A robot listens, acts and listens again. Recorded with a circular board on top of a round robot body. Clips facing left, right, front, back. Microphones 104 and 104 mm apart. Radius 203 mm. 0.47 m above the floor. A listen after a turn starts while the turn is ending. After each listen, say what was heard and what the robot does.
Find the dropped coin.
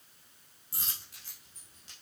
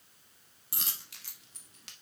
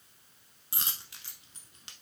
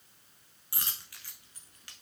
The dropped coin: 65° right. Turn 65° right.
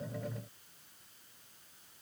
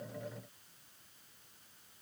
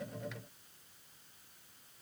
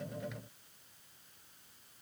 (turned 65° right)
Facing where the dropped coin came from. I can't hear it now.